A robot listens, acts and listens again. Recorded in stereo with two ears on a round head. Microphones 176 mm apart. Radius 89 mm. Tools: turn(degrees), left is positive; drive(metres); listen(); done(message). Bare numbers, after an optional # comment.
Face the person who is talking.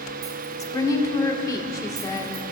# The woman speaking: about 20° left or 160° left.
turn(20)
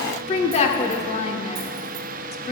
# So it is at 140° left.
turn(140)
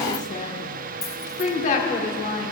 # The woman speaking is now 40° left.
turn(40)
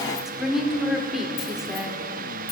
done("Found it: a woman speaking, straight ahead.")